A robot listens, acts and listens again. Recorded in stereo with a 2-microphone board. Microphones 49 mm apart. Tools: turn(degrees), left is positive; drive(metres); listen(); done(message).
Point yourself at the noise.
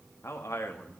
turn(degrees=90)
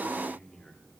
turn(degrees=10)
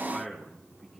done("Found it: a man speaking, straight ahead.")